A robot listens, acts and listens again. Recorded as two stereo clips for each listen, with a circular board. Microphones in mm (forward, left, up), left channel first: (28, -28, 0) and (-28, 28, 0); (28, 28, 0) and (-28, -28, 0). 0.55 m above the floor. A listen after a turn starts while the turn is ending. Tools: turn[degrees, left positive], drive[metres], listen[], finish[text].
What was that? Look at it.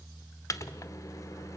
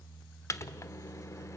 Action: finish[Facing the microwave.]